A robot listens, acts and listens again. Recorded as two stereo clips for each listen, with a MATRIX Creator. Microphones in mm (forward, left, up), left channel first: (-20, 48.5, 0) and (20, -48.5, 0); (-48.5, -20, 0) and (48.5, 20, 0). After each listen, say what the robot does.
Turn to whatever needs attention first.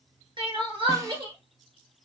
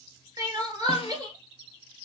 Turn 25° right.
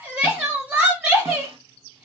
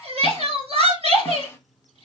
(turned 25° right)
Turn 10° left.
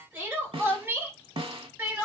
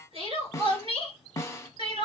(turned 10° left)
Facing the crying.